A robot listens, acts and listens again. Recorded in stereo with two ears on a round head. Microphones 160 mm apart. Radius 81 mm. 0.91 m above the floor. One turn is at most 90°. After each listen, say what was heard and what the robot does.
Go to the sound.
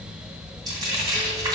The frying: about 25° right or 155° right. Turn 25° right.
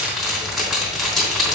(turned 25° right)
Drive 1.0 m forward.
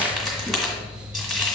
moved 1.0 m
Drive 1.0 m forward.
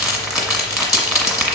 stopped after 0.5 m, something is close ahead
Arrived at the frying, straight ahead.